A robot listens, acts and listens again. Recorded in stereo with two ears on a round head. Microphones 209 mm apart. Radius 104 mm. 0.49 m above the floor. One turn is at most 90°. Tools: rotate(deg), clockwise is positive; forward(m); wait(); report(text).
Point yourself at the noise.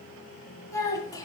rotate(-15)
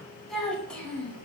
rotate(-30)
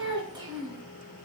rotate(20)
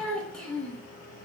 report("Facing the child speaking.")